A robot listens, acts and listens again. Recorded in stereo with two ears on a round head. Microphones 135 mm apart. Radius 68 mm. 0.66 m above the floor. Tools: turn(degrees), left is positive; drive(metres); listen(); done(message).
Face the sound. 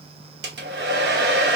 turn(degrees=-90)
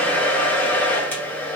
turn(degrees=10)
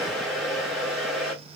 done("Found it: a hair dryer, straight ahead, under 1 m away.")